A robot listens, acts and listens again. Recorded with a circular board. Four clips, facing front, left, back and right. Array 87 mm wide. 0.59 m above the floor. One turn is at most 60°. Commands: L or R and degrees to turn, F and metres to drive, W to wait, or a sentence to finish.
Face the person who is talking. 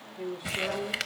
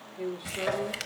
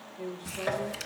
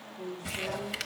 L55
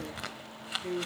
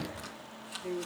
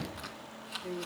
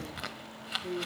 Found it: a woman speaking, straight ahead, 1 to 2 m away.